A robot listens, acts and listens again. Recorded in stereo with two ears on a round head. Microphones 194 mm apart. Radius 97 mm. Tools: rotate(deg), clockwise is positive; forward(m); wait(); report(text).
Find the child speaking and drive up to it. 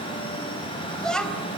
rotate(-30)
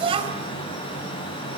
rotate(25)
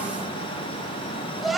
forward(1.0)
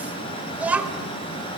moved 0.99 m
forward(1.0)
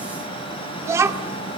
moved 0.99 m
rotate(15)
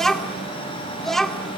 forward(1.0)
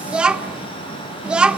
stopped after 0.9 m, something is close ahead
report("I am next to the child speaking.")